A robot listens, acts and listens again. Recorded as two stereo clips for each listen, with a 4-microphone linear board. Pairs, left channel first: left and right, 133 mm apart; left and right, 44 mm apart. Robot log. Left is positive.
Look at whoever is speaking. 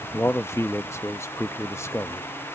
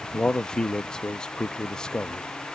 note: The man speaking: about 20° left or 160° left.
cmd yaw +20
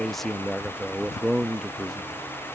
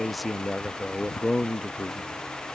end: Found it: a man speaking, straight ahead.